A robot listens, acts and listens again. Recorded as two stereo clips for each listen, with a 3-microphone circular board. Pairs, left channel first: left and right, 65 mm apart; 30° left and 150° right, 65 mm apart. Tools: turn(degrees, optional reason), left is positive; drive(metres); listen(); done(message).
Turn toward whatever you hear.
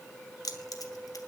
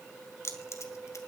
turn(degrees=70, reason="The keys jangling: 70° left.")
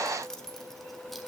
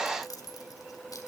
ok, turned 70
done("Facing the keys jangling, 2 to 4 m away.")